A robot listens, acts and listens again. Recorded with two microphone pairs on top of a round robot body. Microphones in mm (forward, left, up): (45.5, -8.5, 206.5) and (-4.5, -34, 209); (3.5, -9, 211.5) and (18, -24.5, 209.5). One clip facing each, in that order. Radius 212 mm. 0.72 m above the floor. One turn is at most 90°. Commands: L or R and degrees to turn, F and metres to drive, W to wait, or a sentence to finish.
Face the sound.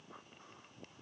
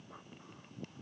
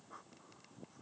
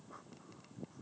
W
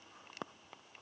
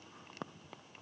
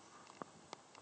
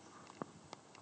W
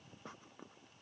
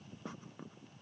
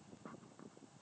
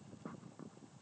I can't make out anything.